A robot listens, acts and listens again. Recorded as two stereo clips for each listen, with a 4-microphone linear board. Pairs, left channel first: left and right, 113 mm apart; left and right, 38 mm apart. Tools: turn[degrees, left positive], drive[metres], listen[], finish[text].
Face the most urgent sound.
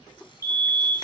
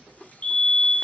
Thought: The fire alarm: about 30° left or 150° left.
Action: turn[30]
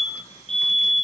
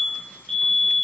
Action: finish[Found it: a fire alarm, straight ahead, 2 to 4 m away.]